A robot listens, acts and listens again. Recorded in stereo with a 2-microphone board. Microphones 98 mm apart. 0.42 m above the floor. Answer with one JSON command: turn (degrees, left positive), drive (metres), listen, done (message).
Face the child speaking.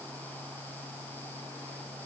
{"listen": true}
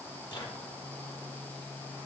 {"listen": true}
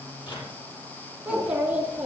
{"turn": -15}
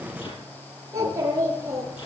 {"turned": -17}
{"turn": -30}
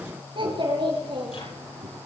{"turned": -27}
{"turn": -120}
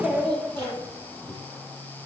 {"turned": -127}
{"turn": 10}
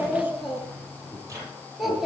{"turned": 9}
{"done": "Found it: a child speaking, straight ahead, over 4 m away."}